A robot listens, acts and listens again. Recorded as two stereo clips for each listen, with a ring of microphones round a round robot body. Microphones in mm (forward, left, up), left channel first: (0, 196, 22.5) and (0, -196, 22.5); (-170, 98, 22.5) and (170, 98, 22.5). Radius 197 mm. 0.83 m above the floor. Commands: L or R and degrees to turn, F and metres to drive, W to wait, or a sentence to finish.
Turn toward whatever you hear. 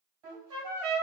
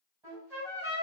R85
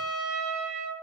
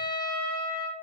Facing the trumpet, 1 to 2 m away.